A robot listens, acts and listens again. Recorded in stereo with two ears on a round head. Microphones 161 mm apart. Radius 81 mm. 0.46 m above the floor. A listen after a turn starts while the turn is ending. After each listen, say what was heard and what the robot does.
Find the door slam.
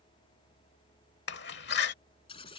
The door slam: about 65° left or 115° left. Turn 65° left.
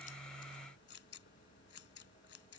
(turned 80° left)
Keep listening.
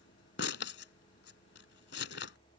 I heard a door slam, but can't make it out now. It was about 15° right or 35° left.